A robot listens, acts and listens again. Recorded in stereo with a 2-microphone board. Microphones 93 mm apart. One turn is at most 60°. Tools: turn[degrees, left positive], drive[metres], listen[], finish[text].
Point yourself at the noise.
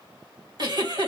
Thought: The giggle: about 50° right or 130° right.
Action: turn[-50]
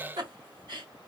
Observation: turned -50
Thought: So it is at 70° right.
Action: turn[-60]
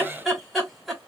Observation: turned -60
Action: finish[Facing the giggle.]